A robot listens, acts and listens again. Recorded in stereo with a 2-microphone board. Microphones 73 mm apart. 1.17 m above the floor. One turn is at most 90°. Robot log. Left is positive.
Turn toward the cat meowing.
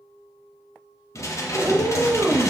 note: The cat meowing: about 45° right or 135° right.
cmd yaw -45
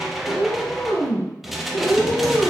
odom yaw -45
note: So it is at 15° left.
cmd yaw +15
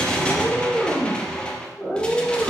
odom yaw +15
end: Facing the cat meowing.